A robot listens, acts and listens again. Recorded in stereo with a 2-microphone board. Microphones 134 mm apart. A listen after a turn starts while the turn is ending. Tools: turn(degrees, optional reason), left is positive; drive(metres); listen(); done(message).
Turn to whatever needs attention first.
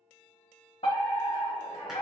turn(degrees=50, reason="The fire alarm: about 50° left or 130° left.")
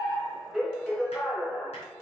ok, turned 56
done("Found it: a fire alarm, straight ahead.")